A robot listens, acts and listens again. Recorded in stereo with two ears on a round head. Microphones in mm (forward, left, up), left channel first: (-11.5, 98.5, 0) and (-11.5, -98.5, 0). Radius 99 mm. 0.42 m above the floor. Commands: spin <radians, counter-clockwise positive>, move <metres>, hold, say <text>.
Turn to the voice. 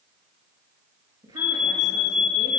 spin -0.35
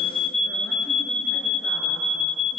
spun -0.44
hold
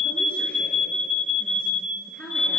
say Facing the woman speaking, over 4 m away.